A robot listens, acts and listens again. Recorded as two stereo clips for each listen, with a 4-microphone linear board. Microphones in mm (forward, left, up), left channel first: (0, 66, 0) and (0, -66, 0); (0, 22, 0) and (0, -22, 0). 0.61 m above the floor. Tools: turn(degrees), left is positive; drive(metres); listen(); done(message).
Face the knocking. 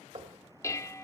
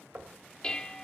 turn(degrees=-40)
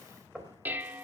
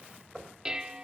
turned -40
done("Facing the knocking, 2 to 4 m away.")